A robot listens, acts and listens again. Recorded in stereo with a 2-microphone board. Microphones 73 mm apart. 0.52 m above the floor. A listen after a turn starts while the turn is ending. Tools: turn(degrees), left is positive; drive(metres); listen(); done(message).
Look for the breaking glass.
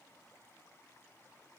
listen()
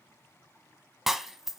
turn(degrees=-30)
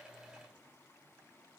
listen()
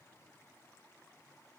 done("I heard breaking glass, but can't make it out now. It was about 25° left or 145° right.")